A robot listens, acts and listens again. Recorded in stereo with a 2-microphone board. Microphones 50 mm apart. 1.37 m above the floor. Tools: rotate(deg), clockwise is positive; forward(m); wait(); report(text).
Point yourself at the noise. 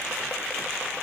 wait()
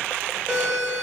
rotate(20)
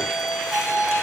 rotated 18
report("Found it: a doorbell, straight ahead, 2 to 4 m away.")